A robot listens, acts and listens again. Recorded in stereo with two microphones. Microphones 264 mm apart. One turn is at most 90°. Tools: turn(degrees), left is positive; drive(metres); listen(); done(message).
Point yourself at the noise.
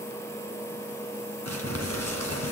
turn(degrees=-70)
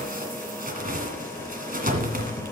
turn(degrees=-35)
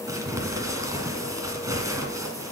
turn(degrees=-15)
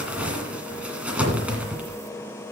done("Facing the crumpling, 1 to 2 m away.")